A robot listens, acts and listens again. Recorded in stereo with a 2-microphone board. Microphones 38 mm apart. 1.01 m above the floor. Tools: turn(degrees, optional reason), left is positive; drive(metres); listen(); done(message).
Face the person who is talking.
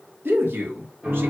turn(degrees=-70, reason="The man speaking: about 70° right or 110° right.")
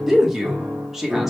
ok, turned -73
done("Found it: a man speaking, straight ahead.")